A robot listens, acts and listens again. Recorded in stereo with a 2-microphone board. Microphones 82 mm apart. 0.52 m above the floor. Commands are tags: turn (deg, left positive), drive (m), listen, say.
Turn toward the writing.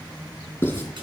<turn deg="25"/>
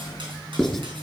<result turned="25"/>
<say>Found it: writing, straight ahead, 2 to 4 m away.</say>